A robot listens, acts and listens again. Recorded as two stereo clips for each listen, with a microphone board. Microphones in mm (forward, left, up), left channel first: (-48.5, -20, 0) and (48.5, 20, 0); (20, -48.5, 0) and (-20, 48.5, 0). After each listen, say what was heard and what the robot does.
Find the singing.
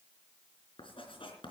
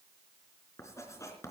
Keep listening.
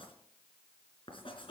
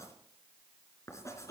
Keep listening.
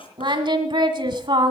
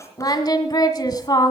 The singing: 20° right. Turn 20° right.
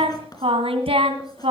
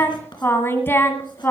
Found it: singing, straight ahead.